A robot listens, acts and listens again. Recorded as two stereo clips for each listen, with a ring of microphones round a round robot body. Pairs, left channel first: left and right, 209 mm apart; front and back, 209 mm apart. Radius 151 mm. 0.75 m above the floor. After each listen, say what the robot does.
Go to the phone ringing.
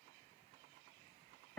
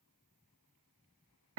Keep listening.
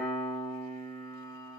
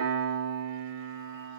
Keep listening.
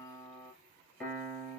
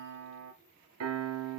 I can't make out a phone ringing, only a piano.